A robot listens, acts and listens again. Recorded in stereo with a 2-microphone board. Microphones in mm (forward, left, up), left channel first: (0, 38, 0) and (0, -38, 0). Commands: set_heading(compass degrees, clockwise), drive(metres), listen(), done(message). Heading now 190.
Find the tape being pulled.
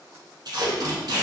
set_heading(255)
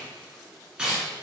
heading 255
set_heading(265)
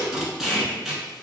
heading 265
done("Facing the tape being pulled.")